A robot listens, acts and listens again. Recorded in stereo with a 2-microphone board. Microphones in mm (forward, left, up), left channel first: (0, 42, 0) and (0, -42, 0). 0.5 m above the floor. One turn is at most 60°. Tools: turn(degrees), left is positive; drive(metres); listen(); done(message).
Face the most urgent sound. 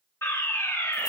turn(degrees=30)
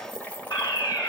turn(degrees=60)
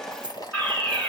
turn(degrees=20)
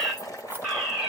done("Found it: a fire alarm, straight ahead.")